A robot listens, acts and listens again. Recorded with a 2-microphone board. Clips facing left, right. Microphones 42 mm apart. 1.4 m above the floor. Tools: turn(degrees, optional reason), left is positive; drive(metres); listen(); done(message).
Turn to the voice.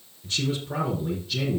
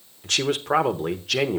turn(degrees=-90)
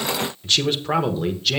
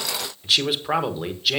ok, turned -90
turn(degrees=-10, reason="So it is at 10° right.")
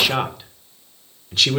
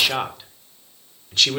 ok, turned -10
done("Found it: a man speaking, straight ahead, 1 to 2 m away.")